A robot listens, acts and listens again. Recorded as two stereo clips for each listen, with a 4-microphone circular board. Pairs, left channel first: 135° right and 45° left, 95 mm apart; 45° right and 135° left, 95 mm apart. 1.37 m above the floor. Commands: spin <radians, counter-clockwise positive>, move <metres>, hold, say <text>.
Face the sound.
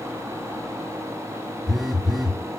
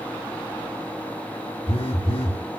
spin -0.79
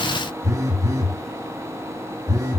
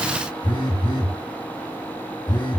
spin -0.17
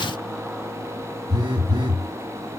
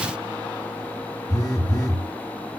say Facing the phone buzzing.